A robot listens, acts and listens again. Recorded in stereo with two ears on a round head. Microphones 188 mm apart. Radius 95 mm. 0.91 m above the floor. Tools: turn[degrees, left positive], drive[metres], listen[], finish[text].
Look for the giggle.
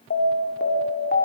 Action: listen[]
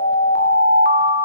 Action: listen[]
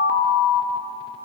Action: finish[I can't make out a giggle to turn to.]